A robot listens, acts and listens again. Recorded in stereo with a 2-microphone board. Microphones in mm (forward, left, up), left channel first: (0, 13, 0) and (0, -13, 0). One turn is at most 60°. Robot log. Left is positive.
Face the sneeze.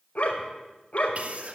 note: The sneeze: about 60° right or 120° right.
cmd yaw -60
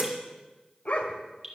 note: So it is at 55° right.
cmd yaw -55
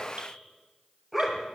end: Facing where the sneeze came from. I can't hear it now.